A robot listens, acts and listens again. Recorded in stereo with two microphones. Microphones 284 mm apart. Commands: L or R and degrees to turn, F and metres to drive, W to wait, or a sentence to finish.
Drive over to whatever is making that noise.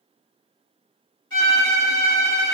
R50
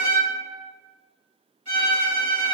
R80
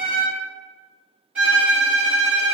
F1.0
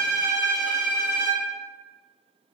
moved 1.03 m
R10
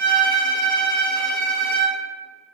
F1.0
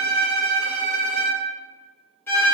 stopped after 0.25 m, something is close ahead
L10
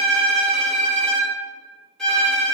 I am next to the violin.